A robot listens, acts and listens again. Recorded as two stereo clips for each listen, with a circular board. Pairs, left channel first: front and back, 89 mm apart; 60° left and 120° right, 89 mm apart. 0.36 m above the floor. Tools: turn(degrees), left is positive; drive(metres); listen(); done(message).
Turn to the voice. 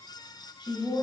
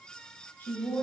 done("Found it: a woman speaking, straight ahead.")